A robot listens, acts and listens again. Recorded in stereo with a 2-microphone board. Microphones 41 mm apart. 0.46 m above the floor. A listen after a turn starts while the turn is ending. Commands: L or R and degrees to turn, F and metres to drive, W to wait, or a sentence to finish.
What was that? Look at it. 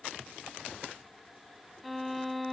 L30
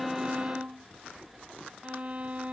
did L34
R35
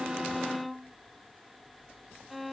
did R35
Facing the violin.